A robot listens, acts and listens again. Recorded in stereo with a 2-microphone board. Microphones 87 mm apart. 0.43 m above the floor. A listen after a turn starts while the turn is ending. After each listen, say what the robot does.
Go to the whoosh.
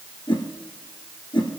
Turn 65° left.
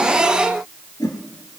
Turn 50° left.
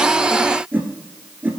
Turn 20° right.
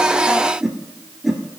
Drive 1.0 m forward.
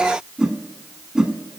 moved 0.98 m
Turn 10° right.
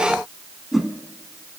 Drive 1.0 m forward.
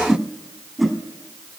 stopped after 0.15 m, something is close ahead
I am next to the whoosh.